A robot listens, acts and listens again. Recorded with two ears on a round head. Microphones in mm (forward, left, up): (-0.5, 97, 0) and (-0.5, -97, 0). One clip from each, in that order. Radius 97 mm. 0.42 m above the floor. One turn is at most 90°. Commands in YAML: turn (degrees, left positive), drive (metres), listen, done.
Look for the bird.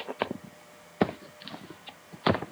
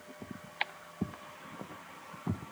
listen: true
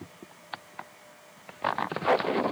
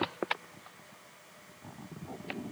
listen: true
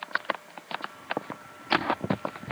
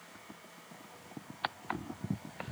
done: "I can't make out a bird."